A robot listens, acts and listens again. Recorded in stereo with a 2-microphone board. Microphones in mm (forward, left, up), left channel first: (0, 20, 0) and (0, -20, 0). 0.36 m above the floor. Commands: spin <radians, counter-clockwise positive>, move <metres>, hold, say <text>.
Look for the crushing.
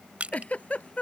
spin -0.61
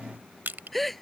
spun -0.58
spin -1.92
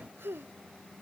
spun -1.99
say Facing the crushing.